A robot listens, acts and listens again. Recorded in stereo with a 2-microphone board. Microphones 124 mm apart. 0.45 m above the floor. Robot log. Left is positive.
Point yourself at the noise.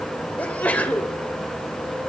cmd yaw +30
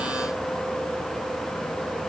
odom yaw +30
cmd idle
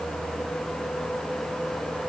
end: I heard a sneeze, but can't make it out now. It was about 20° right or 140° left.